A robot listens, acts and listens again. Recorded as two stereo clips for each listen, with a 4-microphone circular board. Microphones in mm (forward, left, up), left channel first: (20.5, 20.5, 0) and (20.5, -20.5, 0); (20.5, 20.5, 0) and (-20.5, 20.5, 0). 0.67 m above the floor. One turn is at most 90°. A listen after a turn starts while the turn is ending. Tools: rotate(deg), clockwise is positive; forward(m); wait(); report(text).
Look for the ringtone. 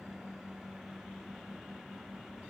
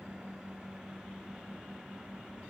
wait()
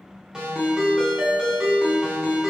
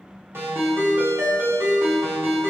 rotate(90)
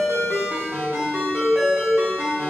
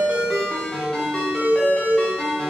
rotate(65)
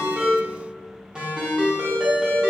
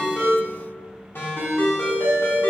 rotate(20)
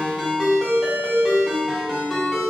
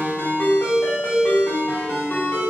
report("Found it: a ringtone, straight ahead.")